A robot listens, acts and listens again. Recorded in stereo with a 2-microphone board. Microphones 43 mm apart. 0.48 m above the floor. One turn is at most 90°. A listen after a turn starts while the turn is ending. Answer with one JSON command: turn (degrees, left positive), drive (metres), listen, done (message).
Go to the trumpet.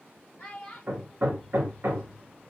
{"listen": true}
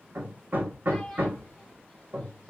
{"listen": true}
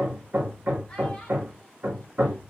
{"done": "I can't make out a trumpet to turn to."}